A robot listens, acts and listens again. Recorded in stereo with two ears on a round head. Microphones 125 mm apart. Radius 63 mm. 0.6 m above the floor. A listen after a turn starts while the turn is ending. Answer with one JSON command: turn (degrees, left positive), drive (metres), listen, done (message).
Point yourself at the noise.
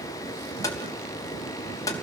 {"turn": 25}
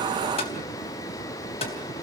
{"listen": true}
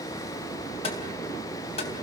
{"turn": 135}
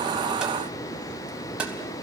{"turn": -10}
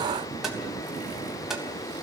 {"done": "Found it: tapping, straight ahead."}